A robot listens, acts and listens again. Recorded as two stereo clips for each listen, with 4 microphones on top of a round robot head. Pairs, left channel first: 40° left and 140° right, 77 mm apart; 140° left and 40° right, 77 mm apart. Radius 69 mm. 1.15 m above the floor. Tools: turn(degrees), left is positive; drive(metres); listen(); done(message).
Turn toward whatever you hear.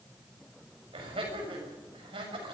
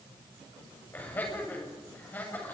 turn(degrees=-150)
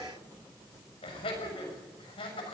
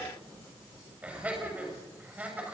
turn(degrees=35)
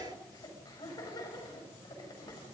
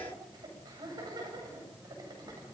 done("Facing the laughter.")